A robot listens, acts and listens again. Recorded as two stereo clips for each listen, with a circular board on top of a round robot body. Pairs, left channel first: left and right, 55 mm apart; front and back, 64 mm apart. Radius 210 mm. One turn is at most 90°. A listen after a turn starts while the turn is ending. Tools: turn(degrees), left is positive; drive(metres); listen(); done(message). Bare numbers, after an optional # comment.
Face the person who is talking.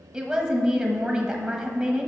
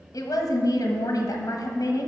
# The woman speaking: 25° right.
turn(-25)
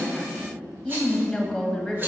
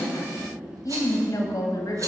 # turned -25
done("Facing the woman speaking, 1 to 2 m away.")